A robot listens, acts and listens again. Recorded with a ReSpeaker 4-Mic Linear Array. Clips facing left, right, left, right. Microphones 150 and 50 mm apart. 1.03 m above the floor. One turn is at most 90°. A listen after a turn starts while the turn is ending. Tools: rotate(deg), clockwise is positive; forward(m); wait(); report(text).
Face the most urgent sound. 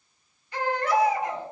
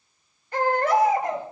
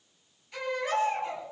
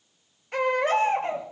rotate(50)
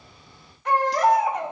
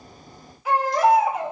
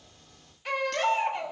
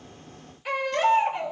report("Facing the baby crying, over 4 m away.")